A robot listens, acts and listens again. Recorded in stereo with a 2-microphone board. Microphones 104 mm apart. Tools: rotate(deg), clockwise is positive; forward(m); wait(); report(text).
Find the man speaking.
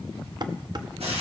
wait()
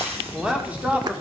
rotate(30)
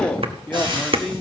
rotate(-10)
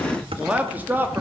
rotate(20)
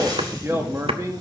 rotate(30)
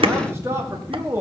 rotate(30)
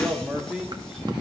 rotate(10)
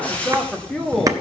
report("Facing the man speaking.")